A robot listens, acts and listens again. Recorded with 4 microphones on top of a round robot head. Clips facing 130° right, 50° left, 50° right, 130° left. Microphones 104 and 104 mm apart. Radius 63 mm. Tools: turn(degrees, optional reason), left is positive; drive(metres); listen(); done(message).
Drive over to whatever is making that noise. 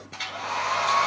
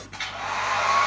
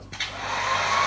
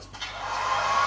turn(degrees=-70, reason="The hair dryer: 70° right.")
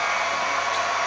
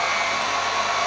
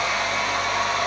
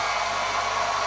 turn(degrees=-20, reason="The hair dryer is now 20° right.")
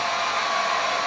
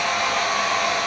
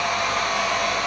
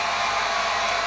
drive(metres=1.0)
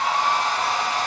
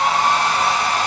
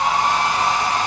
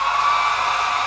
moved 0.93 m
turn(degrees=10, reason="The hair dryer is now 10° left.")
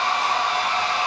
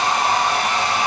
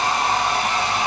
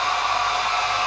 drive(metres=1.0)
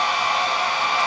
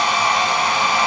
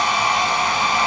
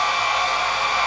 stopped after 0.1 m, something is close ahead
done("I am next to the hair dryer.")